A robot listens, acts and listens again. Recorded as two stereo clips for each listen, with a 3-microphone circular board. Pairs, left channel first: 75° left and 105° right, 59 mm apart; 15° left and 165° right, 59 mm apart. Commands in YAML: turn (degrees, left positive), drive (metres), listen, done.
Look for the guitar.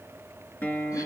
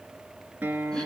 turn: 130
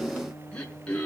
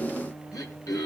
turn: 40
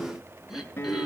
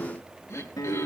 turn: 15
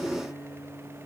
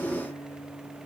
done: "Found it: a guitar, straight ahead, 2 to 4 m away."